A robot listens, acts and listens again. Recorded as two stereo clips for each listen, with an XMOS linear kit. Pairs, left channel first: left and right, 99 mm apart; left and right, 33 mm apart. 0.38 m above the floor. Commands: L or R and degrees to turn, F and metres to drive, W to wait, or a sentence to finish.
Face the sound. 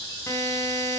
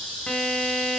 L30
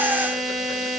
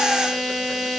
Found it: a buzzer, straight ahead, 2 to 4 m away.